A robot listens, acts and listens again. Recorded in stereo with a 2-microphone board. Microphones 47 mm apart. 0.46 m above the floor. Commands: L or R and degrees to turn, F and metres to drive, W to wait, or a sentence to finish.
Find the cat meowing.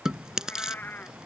L40
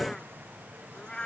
L15
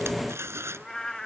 L10
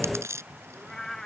L10
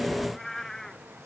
Found it: a cat meowing, straight ahead.